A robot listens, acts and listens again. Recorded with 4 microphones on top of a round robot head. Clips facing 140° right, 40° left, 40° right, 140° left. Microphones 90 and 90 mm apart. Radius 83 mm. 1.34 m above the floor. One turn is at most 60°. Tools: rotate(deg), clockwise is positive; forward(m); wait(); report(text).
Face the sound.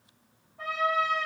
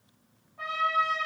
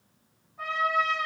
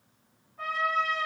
rotate(-45)
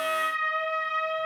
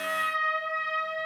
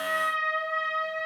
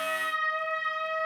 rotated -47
report("Found it: a trumpet, straight ahead, under 1 m away.")